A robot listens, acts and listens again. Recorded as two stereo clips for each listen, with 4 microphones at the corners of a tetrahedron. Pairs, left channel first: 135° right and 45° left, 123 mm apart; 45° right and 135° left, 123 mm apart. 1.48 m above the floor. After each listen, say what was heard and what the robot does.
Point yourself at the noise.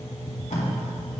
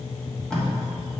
The tape being pulled: 130° right. Turn 130° right.
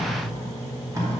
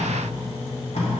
The tape being pulled is now 15° right. Turn 15° right.
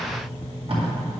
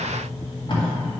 Facing the tape being pulled.